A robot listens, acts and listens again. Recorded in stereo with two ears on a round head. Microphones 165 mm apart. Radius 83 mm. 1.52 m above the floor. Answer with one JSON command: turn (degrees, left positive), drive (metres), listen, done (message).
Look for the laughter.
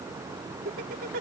{"turn": -55}
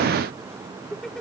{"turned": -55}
{"done": "Facing the laughter."}